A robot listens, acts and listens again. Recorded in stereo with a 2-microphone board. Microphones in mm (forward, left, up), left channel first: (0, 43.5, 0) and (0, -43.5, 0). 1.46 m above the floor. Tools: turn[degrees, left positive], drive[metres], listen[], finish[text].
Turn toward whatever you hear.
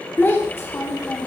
Thought: The child speaking: about 35° left or 145° left.
Action: turn[35]
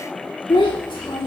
Thought: So it is at 100° left.
Action: turn[100]
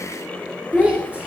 Thought: The child speaking is now 15° right.
Action: turn[-15]
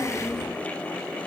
Action: finish[Found it: a child speaking, straight ahead.]